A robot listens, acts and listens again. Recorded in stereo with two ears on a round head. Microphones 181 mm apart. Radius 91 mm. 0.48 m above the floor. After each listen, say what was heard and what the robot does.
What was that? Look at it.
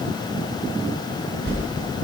The whoosh: about 65° right or 115° right. Turn 65° right.
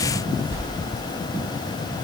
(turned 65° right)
So it is at 50° right. Turn 50° right.
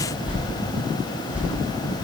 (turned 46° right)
Found it: a whoosh, straight ahead.